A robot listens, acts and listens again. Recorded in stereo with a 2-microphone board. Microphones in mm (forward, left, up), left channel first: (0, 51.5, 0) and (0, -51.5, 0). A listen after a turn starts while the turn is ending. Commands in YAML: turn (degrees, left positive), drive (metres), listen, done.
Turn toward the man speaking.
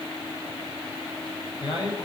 turn: 50
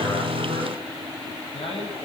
turn: 65
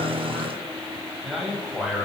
done: "Found it: a man speaking, straight ahead, over 4 m away."